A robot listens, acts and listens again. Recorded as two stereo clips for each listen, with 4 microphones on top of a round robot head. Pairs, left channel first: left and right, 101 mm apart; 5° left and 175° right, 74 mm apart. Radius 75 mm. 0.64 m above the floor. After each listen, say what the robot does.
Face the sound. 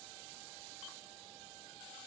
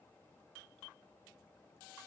Keep listening.
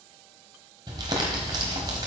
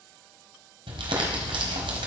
Turn 150° right.
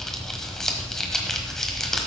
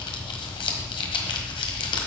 Found it: crumpling, straight ahead.